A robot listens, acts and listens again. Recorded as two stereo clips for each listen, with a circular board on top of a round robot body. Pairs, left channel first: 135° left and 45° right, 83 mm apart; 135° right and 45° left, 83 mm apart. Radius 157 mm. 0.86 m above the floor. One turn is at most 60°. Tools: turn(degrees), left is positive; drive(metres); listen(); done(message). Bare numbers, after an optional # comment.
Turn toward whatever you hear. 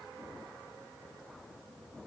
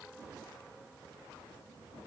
listen()
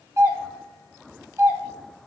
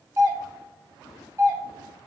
done("Facing the doorbell.")